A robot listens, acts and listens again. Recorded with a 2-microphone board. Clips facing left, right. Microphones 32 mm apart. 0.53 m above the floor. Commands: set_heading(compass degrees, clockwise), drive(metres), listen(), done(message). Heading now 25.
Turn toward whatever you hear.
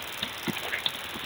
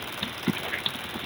listen()
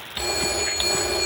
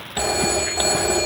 set_heading(95)
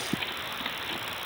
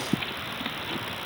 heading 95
listen()
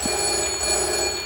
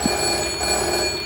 set_heading(110)
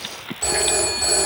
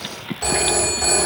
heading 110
done("Found it: a phone ringing, straight ahead, 2 to 4 m away.")